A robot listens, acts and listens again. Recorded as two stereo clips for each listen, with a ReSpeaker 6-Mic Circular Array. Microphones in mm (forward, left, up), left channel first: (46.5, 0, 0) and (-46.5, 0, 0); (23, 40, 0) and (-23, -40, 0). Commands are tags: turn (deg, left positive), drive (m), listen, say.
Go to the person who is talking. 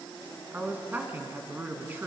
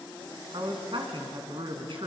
<turn deg="-110"/>
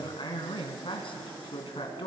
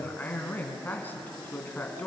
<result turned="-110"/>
<turn deg="-10"/>
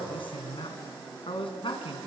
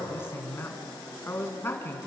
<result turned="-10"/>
<drive m="1.0"/>
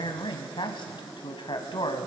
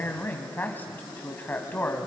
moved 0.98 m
<drive m="1.0"/>
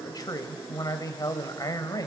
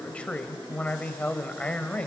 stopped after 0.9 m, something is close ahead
<turn deg="-10"/>
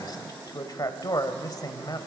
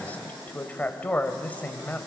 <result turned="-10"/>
<say>I am next to the man speaking.</say>